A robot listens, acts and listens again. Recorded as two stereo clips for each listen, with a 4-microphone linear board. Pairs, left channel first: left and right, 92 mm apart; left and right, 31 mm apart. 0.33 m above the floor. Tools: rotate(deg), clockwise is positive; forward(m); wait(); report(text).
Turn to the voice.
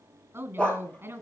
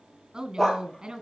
rotate(25)
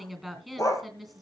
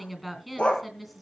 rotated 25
report("Found it: a woman speaking, straight ahead, 2 to 4 m away.")